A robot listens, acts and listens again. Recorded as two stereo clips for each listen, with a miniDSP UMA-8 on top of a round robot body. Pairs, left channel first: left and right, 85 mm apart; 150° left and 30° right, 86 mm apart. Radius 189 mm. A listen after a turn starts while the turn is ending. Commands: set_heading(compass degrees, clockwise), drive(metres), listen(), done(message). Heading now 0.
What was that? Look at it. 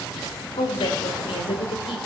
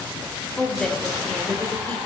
set_heading(285)
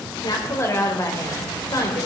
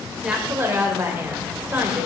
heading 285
set_heading(245)
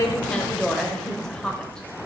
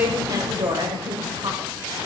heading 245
set_heading(235)
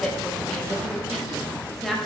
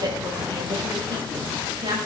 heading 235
done("Found it: a woman speaking, straight ahead, 2 to 4 m away.")